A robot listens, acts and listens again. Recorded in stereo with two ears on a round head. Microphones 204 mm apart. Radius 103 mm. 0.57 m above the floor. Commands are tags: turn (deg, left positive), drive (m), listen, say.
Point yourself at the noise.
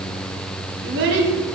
<turn deg="-60"/>
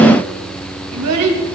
<turn deg="-65"/>
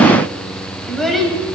<say>Facing the child speaking.</say>